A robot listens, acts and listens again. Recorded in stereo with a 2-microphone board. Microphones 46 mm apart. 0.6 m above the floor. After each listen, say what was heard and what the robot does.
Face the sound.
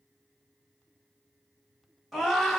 Turn 30° left.
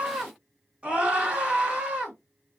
So it is at 25° right. Turn 25° right.
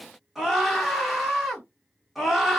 Found it: a scream, straight ahead, 1 to 2 m away.